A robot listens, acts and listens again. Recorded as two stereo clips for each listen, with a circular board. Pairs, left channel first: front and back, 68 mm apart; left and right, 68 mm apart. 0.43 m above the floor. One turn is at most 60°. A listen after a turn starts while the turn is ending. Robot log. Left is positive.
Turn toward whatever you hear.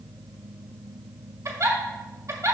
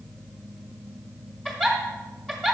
note: The giggle: 170° left.
cmd yaw +60
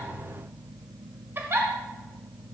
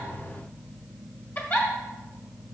note: The giggle is now 125° left.
cmd yaw +60
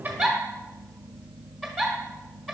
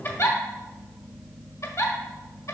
note: The giggle is now 80° left.
cmd yaw +60
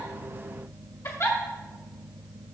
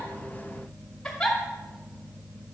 end: Found it: a giggle, straight ahead, 1 to 2 m away.